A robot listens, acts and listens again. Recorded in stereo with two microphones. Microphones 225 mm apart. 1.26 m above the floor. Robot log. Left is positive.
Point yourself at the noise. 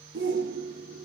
note: The shout: about 60° right or 120° right.
cmd yaw -60
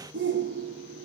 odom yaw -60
note: So it is at 60° right.
cmd yaw -60
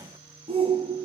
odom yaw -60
note: The shout is now 25° right.
cmd yaw -25
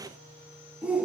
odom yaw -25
end: Facing the shout, under 1 m away.